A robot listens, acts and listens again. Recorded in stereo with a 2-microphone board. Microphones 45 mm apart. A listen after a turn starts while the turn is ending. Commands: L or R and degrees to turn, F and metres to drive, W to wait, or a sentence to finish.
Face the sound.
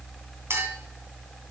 R75
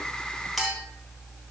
Facing the clink.